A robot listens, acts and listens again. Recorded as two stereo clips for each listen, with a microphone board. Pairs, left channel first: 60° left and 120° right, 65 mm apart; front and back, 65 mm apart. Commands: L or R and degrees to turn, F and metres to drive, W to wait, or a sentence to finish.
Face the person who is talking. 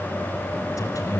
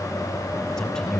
L85
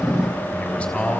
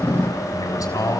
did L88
Found it: a man speaking, straight ahead.